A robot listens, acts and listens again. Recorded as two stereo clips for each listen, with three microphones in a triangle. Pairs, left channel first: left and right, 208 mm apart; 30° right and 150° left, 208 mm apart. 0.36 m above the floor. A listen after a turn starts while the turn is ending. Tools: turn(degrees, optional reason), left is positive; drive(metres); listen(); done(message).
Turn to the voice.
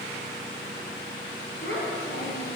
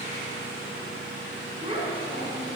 turn(degrees=95, reason="The child speaking: 95° left.")
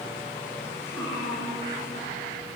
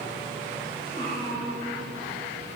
turn(degrees=15, reason="The child speaking is now 15° left.")
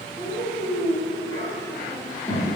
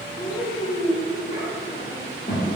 turn(degrees=15, reason="The child speaking is now 15° left.")
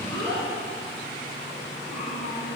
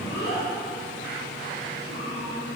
done("Found it: a child speaking, straight ahead.")